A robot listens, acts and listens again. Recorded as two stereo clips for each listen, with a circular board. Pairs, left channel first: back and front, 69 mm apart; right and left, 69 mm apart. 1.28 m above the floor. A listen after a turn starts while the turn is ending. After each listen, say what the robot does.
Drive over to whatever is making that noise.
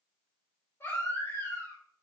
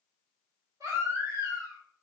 Turn 125° left.
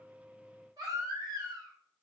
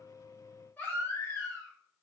Turn 25° right.
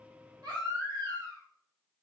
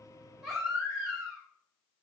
Drive 1.0 m forward.
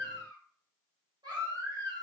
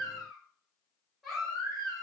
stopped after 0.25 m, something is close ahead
Blocked. The baby crying is further on, straight ahead.